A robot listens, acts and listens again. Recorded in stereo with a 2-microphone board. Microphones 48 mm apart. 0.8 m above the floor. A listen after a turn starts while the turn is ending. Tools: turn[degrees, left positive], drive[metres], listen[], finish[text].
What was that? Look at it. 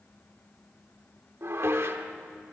Thought: The dishes clattering: about 65° right or 115° right.
Action: turn[-65]
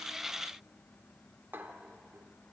Thought: So it is at 50° right.
Action: turn[-50]
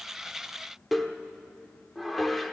Action: finish[Facing the dishes clattering, 1 to 2 m away.]